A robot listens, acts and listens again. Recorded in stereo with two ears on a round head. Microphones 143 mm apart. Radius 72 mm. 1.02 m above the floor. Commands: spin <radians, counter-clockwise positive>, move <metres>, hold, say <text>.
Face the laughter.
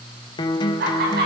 spin -1.13
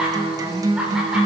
say Facing the laughter, over 4 m away.